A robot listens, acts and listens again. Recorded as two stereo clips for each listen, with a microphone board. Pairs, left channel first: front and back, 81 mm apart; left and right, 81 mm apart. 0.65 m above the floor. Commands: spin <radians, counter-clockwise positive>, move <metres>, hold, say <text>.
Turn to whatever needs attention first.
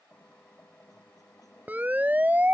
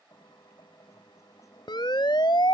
spin 1.92
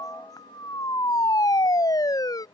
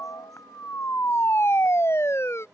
spin 0.61
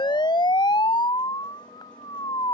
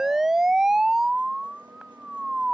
say Facing the siren.